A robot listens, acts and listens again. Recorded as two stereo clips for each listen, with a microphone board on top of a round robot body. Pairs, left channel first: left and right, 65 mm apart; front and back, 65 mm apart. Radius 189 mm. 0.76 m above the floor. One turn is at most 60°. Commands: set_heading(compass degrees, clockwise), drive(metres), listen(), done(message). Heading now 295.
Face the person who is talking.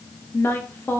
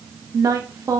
set_heading(235)
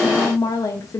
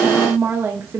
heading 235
set_heading(175)
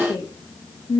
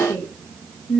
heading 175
set_heading(115)
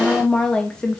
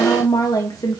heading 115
set_heading(100)
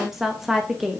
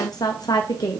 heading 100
done("Facing the woman speaking, under 1 m away.")